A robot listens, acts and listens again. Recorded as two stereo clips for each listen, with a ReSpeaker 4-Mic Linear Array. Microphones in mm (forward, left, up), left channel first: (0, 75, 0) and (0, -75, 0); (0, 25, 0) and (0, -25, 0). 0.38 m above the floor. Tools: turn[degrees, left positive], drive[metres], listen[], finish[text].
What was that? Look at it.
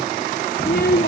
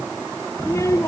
Action: turn[90]
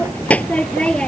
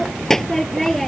Action: finish[Found it: a child speaking, straight ahead.]